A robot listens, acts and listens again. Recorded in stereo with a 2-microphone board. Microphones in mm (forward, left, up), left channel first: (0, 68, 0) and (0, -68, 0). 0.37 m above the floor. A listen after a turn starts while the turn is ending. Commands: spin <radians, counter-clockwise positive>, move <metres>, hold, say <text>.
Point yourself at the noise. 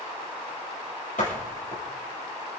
spin 1.22
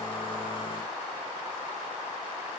hold
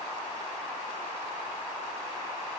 say I heard a door slam, but can't make it out now. It was about straight ahead or 40° left.